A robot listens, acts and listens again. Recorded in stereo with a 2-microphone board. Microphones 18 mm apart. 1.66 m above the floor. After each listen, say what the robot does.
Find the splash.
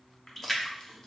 Turn 15° left.
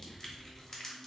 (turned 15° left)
Keep listening.
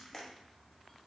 I heard a splash, but can't make it out now. It was about straight ahead or 150° left.